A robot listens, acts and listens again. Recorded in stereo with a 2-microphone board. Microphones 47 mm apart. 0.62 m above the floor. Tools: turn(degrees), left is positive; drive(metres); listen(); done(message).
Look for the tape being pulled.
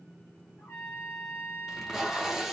turn(degrees=-30)
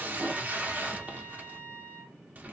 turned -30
turn(degrees=-140)
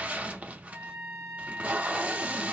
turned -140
turn(degrees=-35)
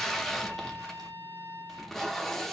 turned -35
done("Facing the tape being pulled, under 1 m away.")